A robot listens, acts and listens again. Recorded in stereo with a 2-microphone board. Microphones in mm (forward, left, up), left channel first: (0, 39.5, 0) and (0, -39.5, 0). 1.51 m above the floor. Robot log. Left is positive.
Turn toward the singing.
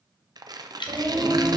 note: The singing: about 50° right or 130° right.
cmd yaw -50
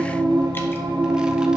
note: So it is at 80° right.
cmd yaw -80
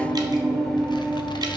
end: Found it: singing, straight ahead.